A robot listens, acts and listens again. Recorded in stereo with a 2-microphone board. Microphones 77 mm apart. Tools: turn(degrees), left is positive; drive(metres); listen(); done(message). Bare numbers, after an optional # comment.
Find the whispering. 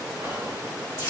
# The whispering: about 55° right or 125° right.
turn(-55)
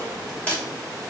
# So it is at 20° right.
turn(-20)
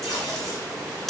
listen()
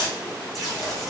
done("Facing the whispering.")